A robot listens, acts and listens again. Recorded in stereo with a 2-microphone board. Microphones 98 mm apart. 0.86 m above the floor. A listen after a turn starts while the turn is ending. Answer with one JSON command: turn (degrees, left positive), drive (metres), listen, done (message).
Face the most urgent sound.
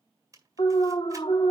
{"turn": 60}
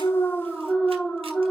{"done": "Found it: an alarm, straight ahead."}